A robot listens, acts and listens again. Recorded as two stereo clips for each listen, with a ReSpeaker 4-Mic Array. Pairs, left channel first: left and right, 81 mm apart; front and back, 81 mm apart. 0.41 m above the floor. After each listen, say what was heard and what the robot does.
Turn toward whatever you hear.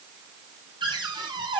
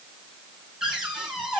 The cupboard door: 95° right. Turn 95° right.
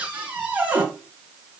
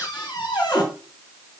The cupboard door is now 20° right. Turn 20° right.
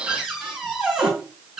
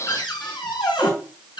Facing the cupboard door, 2 to 4 m away.